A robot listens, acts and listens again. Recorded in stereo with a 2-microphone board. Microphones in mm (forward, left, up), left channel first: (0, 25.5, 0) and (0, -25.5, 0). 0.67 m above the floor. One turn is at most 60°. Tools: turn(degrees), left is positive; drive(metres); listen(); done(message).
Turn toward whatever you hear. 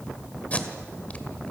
turn(degrees=30)
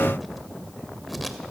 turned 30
listen()
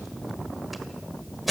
done("Found it: tape being pulled, straight ahead, 1 to 2 m away.")